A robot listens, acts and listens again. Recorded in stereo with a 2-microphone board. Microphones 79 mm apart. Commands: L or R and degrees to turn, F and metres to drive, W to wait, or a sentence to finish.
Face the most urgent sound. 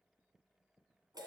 W
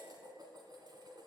W
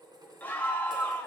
L25
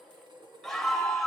Facing the scream.